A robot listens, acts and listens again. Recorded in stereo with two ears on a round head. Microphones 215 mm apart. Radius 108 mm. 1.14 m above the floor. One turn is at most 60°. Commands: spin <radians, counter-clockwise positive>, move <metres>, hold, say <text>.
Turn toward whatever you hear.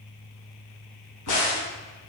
spin 1.05
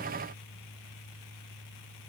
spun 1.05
spin 0.52
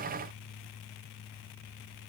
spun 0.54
say Facing where the crack came from. I can't hear it now.